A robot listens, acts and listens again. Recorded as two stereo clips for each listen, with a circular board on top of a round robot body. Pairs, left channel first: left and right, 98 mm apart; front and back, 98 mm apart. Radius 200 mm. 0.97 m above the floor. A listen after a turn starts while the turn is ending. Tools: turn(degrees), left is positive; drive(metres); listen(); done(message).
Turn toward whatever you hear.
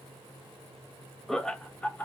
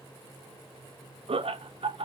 turn(degrees=160)
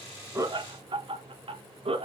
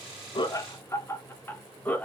turn(degrees=-75)
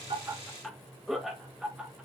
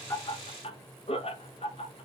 done("Facing the laughter.")